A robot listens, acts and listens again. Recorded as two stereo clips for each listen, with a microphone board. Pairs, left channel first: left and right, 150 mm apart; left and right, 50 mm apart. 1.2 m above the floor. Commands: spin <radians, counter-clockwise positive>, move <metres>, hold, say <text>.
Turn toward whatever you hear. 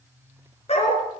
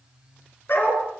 spin 0.79
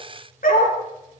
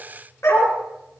spin 1.40
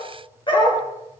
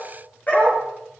spin 0.61
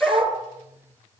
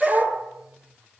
say Facing the dog barking.